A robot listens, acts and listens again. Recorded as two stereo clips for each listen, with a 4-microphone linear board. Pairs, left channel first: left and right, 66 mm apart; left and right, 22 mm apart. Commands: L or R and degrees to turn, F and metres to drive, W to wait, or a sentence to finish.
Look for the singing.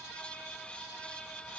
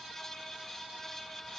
W
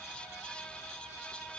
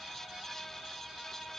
W
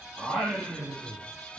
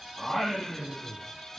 R30
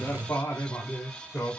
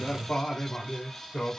L25
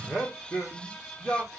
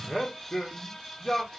Found it: singing, straight ahead, over 4 m away.